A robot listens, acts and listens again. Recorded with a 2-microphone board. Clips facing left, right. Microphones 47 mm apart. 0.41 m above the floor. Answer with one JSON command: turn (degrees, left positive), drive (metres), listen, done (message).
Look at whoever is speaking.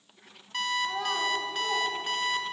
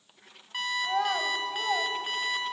{"turn": -60}
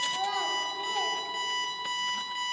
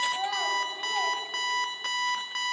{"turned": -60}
{"turn": -10}
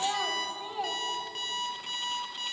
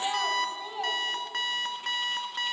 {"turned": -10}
{"done": "Facing the child speaking, 1 to 2 m away."}